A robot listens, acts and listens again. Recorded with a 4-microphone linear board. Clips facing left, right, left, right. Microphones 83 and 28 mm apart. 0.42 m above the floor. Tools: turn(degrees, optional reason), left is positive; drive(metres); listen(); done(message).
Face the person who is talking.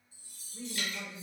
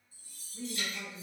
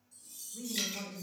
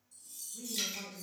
turn(degrees=45, reason="The woman speaking: about 45° left or 135° left.")
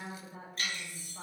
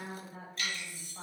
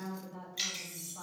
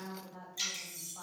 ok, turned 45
done("Facing the woman speaking, 1 to 2 m away.")